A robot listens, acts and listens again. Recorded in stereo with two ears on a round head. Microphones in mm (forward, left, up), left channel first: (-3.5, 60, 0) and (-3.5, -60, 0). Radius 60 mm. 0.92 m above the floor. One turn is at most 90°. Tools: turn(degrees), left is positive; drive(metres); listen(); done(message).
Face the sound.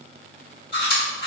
turn(degrees=40)
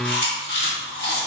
turn(degrees=90)
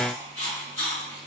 turn(degrees=20)
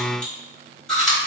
done("Facing the chewing, 1 to 2 m away.")